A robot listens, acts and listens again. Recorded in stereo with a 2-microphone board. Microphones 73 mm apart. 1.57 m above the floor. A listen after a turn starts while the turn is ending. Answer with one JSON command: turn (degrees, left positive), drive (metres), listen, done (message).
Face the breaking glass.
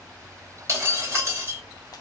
{"turn": -40}
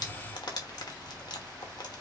{"listen": true}
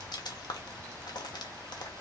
{"done": "I heard breaking glass, but can't make it out now. It was about straight ahead or 100° right."}